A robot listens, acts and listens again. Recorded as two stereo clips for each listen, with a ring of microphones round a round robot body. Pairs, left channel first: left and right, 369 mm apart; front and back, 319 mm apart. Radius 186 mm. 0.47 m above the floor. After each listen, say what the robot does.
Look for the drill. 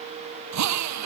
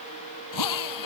Turn 45° right.
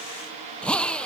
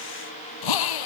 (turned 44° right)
Facing the drill.